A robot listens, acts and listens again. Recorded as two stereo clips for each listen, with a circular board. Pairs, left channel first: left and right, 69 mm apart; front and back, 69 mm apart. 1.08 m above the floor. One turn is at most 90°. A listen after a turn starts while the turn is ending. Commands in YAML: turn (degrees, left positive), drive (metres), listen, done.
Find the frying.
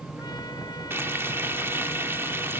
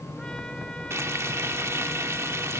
turn: -90
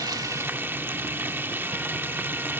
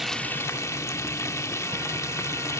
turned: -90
turn: -35
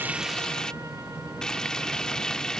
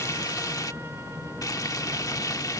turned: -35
turn: 15
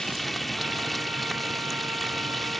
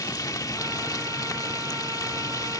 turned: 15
done: "Found it: frying, straight ahead."